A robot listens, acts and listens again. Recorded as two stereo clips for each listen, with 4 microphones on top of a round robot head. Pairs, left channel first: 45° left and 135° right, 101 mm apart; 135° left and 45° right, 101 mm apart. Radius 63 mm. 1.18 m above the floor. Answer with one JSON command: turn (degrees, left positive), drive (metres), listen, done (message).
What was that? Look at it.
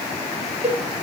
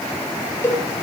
{"turn": -155}
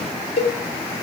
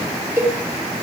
{"turn": 25}
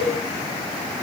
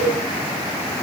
{"done": "Found it: a cowbell, straight ahead, over 4 m away."}